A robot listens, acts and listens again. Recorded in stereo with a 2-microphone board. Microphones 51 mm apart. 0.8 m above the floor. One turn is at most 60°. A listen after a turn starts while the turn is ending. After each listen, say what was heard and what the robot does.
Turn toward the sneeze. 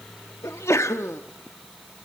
The sneeze: about 70° left or 110° left. Turn 60° left.
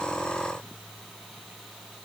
Keep listening.
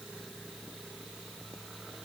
I heard a sneeze, but can't make it out now. It was about 10° left or 50° left.